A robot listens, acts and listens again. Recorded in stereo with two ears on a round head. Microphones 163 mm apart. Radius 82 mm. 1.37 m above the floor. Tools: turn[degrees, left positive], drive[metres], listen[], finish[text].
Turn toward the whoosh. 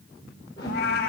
Thought: The whoosh: about 25° left or 155° left.
Action: turn[25]
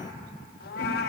Action: listen[]
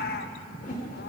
Thought: So it is at 130° left.
Action: turn[130]
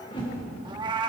Thought: The whoosh is now 30° left.
Action: turn[30]
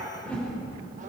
Action: finish[Found it: a whoosh, straight ahead, over 4 m away.]